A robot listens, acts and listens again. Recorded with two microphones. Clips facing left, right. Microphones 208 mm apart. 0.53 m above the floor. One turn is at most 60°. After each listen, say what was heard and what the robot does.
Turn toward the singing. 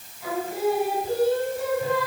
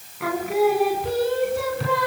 Turn 60° right.
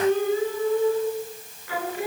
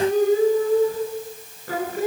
So it is at 45° right. Turn 45° right.
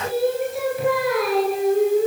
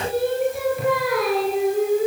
Facing the singing, over 4 m away.